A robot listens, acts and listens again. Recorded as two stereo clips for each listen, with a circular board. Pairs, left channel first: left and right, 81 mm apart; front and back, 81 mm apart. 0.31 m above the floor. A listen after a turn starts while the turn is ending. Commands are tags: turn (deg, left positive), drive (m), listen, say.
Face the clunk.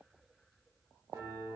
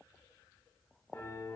<listen/>
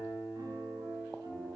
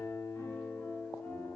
<listen/>
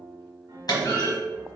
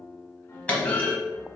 <turn deg="70"/>
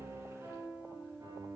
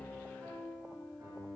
<say>Facing where the clunk came from. I can't hear it now.</say>